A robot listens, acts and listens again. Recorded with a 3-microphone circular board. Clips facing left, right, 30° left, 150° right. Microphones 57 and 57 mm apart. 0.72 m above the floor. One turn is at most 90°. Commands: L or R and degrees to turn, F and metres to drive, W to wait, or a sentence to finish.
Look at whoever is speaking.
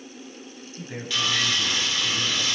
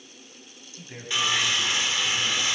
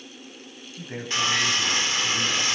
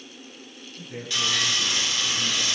L20
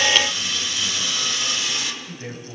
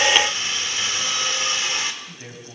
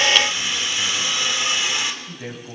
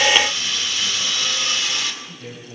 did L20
Found it: a man speaking, straight ahead.